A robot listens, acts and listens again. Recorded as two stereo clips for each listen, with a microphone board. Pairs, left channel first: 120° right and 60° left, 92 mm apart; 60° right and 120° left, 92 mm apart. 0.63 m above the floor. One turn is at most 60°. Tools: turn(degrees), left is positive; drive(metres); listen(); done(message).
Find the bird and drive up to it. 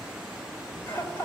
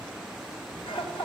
listen()
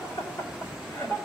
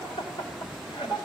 listen()
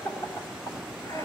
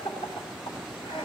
done("I can't make out a bird to turn to.")